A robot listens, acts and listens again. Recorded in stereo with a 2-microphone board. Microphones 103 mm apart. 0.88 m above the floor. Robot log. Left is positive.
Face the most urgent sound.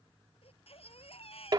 note: The baby crying: about 65° left or 115° left.
cmd yaw +65
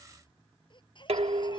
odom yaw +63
note: So it is at 50° left.
cmd yaw +50
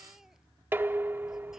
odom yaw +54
end: Facing the baby crying.